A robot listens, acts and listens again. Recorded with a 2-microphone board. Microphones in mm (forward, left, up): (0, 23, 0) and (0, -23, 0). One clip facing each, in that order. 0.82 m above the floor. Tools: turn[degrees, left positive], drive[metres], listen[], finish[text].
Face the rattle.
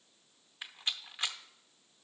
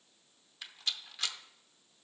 Thought: The rattle: about 25° left or 155° left.
Action: turn[25]
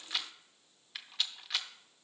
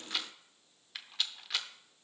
Action: finish[Found it: a rattle, straight ahead.]